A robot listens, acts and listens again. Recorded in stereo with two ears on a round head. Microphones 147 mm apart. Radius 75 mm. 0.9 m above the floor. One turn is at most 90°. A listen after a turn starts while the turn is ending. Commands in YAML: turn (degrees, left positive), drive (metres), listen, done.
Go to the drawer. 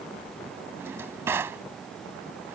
turn: -30
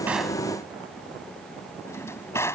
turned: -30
turn: 15
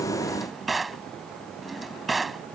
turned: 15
drive: 1.0
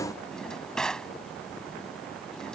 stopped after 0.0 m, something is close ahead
done: "Blocked. The drawer is further on, straight ahead."